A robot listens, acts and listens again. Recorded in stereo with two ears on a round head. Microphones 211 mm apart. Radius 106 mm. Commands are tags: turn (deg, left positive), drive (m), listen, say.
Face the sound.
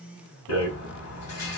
<turn deg="65"/>
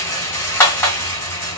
<turn deg="10"/>
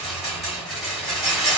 <say>Found it: a rattle, straight ahead.</say>